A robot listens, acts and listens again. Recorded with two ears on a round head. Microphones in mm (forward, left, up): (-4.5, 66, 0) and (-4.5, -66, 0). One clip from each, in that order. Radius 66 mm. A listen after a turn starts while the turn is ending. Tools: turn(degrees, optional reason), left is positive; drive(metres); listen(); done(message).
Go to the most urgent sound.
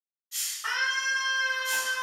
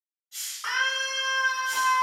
turn(degrees=-60, reason="The scream: about 60° right or 120° right.")
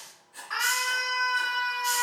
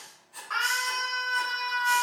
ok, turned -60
drive(metres=1.0)
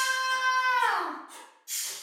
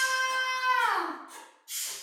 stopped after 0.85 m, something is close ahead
turn(degrees=-10, reason="The scream is now 10° right.")
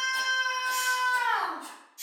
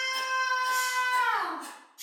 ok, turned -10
done("I am next to the scream.")